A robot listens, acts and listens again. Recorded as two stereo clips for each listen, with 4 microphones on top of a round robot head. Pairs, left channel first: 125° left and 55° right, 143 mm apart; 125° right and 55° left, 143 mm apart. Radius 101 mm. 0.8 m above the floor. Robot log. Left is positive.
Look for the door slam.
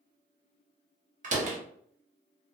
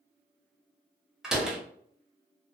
note: The door slam: 30° right.
cmd yaw -30
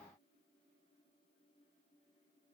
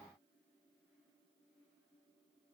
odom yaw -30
end: I heard a door slam from this way, but can't make it out now.